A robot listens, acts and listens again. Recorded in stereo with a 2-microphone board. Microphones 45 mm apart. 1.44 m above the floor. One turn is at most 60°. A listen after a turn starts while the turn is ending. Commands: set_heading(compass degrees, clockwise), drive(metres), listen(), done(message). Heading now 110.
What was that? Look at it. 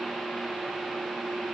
listen()
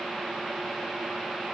listen()
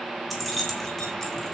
set_heading(80)
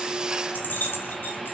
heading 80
set_heading(20)
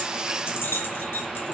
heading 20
set_heading(320)
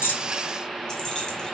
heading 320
set_heading(300)
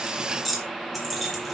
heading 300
done("Facing the keys jangling, 2 to 4 m away.")